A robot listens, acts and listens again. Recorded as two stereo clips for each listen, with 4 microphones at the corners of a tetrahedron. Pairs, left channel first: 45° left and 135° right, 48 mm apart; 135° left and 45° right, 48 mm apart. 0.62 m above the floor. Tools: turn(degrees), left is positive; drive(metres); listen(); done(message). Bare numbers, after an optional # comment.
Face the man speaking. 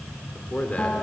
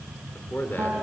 # The man speaking: 105° left.
turn(105)
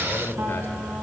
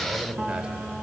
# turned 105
# The man speaking is now 15° left.
turn(15)
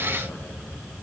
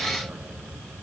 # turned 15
listen()
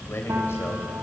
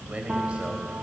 # The man speaking is now 15° left.
turn(15)
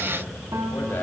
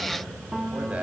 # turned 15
# The man speaking is now 10° left.
turn(10)
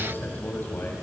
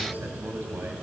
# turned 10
done("Facing the man speaking, over 4 m away.")